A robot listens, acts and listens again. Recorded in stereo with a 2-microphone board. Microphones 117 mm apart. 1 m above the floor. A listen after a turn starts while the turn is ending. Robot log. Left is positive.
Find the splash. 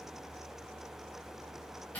cmd idle
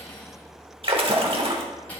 note: The splash: about 50° right or 130° right.
cmd yaw -50
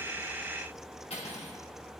cmd idle
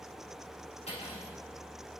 end: I heard a splash, but can't make it out now. It was about straight ahead or 80° right.